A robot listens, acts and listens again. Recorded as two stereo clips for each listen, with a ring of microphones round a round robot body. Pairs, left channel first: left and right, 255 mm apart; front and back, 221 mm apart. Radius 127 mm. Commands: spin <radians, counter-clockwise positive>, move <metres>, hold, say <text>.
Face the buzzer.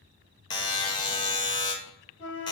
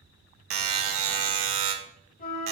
spin 2.88
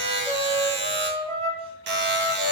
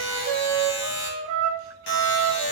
spin -0.79
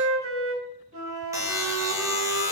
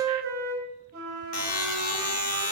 spin -0.17
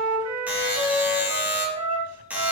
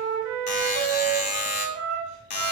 say Found it: a buzzer, straight ahead, under 1 m away.